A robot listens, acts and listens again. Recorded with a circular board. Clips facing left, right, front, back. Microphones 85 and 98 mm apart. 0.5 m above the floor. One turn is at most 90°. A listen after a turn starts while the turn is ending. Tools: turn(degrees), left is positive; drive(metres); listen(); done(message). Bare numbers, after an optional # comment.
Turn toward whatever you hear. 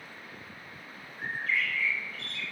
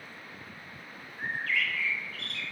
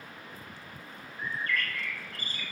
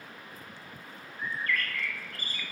# The bird: 60° right.
turn(-60)
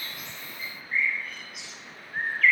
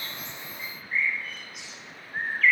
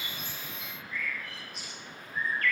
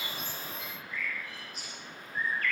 done("Facing the bird, 1 to 2 m away.")